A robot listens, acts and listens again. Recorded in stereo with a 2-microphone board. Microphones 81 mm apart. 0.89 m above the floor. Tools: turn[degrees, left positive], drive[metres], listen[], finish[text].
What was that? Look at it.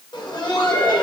Action: turn[90]
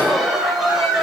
Action: finish[Found it: laughter, straight ahead.]